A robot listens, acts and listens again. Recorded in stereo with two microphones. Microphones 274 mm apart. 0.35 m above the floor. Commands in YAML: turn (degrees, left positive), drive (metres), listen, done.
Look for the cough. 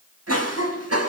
turn: -60
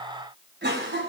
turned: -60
turn: -45
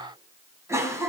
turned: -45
turn: -10
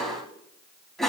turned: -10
done: "Found it: a cough, straight ahead."